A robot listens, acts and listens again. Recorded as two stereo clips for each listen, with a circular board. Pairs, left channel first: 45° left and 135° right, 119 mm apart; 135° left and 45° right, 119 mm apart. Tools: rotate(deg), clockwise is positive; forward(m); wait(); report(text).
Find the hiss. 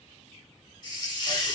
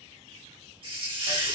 report("Found it: a hiss, straight ahead, 1 to 2 m away.")